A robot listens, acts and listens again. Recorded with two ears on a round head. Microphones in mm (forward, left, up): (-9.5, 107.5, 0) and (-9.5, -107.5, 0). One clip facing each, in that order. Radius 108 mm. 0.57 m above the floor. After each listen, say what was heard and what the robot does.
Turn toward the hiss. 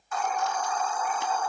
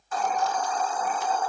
The hiss: about 30° right or 150° right. Turn 30° right.
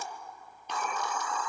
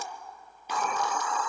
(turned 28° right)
So it is at 125° right. Turn 125° right.
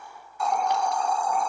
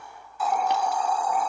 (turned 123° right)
Found it: a hiss, straight ahead, under 1 m away.